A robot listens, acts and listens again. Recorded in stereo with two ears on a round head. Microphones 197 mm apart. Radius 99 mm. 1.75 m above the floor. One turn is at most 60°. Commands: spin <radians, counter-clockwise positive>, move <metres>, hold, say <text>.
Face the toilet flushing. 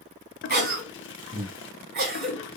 spin 0.96
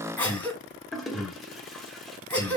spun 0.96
say Found it: a toilet flushing, straight ahead.